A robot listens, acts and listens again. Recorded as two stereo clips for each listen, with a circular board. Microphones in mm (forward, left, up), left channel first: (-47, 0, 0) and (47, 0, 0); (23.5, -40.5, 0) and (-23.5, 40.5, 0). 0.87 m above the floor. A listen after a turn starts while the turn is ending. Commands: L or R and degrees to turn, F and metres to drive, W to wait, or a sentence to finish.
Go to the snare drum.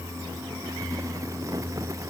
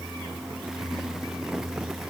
W
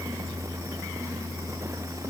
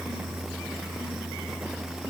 W
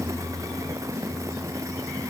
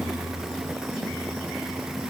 I can't make out a snare drum to turn to.